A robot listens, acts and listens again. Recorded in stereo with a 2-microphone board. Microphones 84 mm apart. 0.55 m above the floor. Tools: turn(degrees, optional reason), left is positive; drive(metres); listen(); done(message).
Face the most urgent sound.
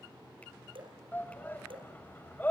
turn(degrees=20, reason="The shout: about 20° left or 160° left.")
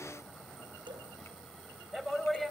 done("Found it: a shout, straight ahead.")